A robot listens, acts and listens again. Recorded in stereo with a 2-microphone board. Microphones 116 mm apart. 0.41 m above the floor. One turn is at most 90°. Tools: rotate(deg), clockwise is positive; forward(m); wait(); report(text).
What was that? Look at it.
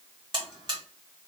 rotate(40)
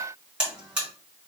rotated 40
rotate(10)
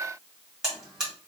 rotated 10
report("Found it: a buzzer, straight ahead.")